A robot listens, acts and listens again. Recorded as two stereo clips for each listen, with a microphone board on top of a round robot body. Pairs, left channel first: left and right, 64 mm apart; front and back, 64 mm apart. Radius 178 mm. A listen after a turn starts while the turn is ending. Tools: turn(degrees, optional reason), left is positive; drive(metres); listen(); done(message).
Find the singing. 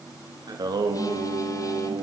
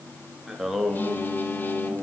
turn(degrees=-80, reason="The singing: 80° right.")
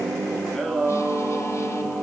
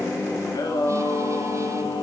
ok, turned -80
turn(degrees=15, reason="The singing is now 15° left.")
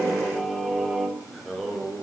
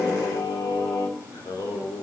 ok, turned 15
turn(degrees=10, reason="The singing is now 10° left.")
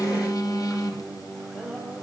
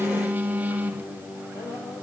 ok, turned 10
done("Found it: singing, straight ahead, over 4 m away.")